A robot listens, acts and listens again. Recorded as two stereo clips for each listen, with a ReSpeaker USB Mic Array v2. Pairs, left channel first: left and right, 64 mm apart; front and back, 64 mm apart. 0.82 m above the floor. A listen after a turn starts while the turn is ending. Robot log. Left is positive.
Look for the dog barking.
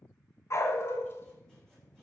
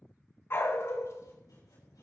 note: The dog barking: 40° left.
cmd yaw +40
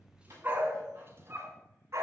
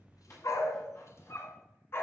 note: The dog barking is now 50° right.
cmd yaw -50
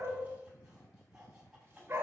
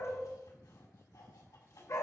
note: The dog barking is now 35° right.
cmd yaw -35
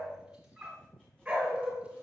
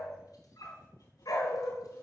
note: The dog barking is now 15° right.
cmd yaw -15
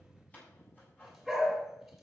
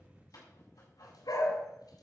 end: Facing the dog barking, 2 to 4 m away.